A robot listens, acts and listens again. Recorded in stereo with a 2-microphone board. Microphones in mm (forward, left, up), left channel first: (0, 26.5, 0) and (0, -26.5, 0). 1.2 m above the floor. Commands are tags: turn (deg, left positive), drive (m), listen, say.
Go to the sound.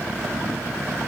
<listen/>
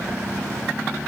<listen/>
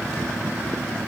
<say>I can't make out anything.</say>